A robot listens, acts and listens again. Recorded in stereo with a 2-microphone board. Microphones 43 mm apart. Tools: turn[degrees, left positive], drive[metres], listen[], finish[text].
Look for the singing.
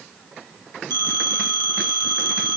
Action: listen[]
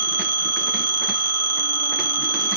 Action: listen[]
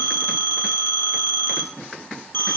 Action: finish[I can't make out singing to turn to.]